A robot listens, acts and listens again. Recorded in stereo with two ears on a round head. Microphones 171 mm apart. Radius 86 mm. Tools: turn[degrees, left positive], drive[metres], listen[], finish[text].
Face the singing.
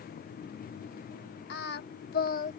Thought: The singing: about 45° left or 135° left.
Action: turn[45]
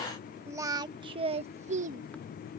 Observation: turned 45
Thought: So it is at 40° right.
Action: turn[-40]
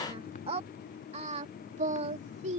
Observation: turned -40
Thought: The singing is now 35° right.
Action: turn[-35]
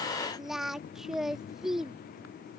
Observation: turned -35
Action: finish[Found it: singing, straight ahead.]